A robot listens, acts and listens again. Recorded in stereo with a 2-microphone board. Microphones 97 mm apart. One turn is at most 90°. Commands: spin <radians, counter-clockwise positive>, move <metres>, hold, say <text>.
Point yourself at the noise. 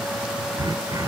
spin -0.79
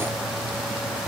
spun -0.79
say Facing the throat clearing.